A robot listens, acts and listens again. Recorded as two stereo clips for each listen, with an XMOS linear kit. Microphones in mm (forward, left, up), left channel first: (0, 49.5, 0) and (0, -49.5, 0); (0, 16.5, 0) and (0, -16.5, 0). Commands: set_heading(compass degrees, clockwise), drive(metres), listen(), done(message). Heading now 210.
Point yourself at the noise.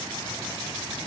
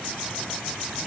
listen()
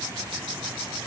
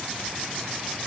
listen()
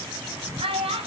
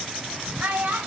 set_heading(280)
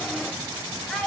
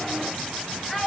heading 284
set_heading(274)
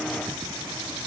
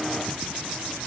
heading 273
listen()
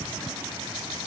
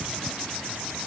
listen()
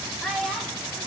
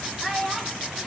done("Facing the child speaking.")